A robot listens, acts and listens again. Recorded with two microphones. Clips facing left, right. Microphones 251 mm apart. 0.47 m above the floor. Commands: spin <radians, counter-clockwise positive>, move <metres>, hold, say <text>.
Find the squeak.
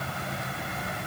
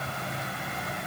hold
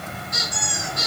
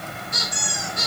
spin 0.61
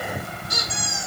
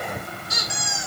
spin 2.01
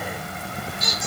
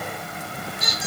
spin -0.17
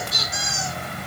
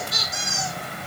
say Facing the squeak.